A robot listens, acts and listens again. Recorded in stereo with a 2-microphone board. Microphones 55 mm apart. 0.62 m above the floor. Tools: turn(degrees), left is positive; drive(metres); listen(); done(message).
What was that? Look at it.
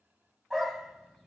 turn(degrees=30)
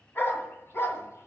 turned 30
turn(degrees=130)
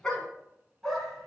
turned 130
done("Facing the dog barking.")